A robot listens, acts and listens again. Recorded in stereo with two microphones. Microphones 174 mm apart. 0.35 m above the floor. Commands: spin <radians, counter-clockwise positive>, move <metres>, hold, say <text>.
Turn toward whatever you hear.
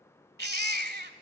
spin -1.22
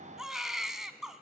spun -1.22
say Facing the baby crying.